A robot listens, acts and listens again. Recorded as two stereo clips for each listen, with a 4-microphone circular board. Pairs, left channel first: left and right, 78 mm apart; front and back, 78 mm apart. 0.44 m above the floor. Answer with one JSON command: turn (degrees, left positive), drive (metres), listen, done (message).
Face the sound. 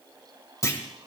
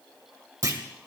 {"turn": 135}
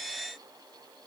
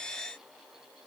{"done": "I heard a clunk from this way, but can't make it out now."}